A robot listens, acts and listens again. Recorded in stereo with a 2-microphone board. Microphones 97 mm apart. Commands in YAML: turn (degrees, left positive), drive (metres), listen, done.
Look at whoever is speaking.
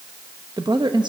turn: -50
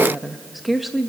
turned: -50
done: "Facing the woman speaking."